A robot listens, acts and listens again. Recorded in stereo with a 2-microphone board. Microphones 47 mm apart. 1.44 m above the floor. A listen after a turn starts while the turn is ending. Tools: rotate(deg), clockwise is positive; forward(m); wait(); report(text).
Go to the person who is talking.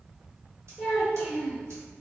rotate(-30)
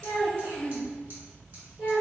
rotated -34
rotate(30)
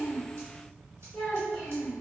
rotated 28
forward(1.0)
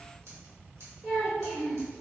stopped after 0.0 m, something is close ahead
rotate(10)
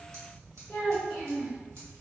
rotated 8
report("Something is in my way. I am facing the child speaking but have not reached it.")